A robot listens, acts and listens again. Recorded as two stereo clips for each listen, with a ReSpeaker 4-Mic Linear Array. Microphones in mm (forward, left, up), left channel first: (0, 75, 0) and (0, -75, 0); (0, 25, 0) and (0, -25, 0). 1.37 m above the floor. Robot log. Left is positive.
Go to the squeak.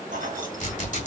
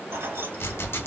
note: The squeak: about 55° left or 125° left.
cmd yaw +55
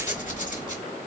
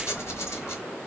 note: So it is at 60° left.
cmd yaw +60
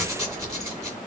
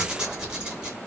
note: The squeak is now 20° right.
cmd yaw -20
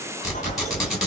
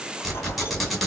cmd fwd 1.0
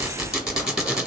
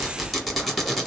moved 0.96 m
cmd fwd 1.0
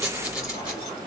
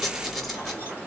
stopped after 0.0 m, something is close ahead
end: Arrived at the squeak, straight ahead.